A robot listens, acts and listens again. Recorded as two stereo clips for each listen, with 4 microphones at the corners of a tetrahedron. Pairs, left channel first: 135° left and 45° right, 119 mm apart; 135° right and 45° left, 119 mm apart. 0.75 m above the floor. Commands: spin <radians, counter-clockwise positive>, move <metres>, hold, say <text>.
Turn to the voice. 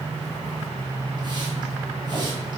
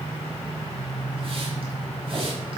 hold
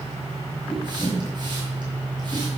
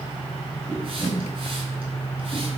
hold
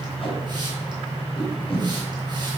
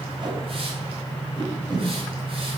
say I can't make out anyone speaking, only tape being pulled.